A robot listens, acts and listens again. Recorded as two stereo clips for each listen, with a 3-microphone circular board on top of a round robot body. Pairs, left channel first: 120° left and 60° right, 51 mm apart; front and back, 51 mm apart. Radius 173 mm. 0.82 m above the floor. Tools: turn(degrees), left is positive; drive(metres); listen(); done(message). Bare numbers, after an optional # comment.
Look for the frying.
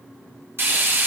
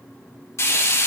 # The frying: 20° right.
turn(-20)
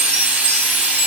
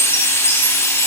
done("Found it: frying, straight ahead, 2 to 4 m away.")